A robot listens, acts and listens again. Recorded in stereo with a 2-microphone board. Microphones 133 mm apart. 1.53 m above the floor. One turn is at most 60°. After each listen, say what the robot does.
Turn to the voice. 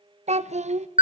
Turn 55° right.
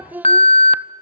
Turn 15° right.
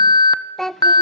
Found it: a child speaking, straight ahead.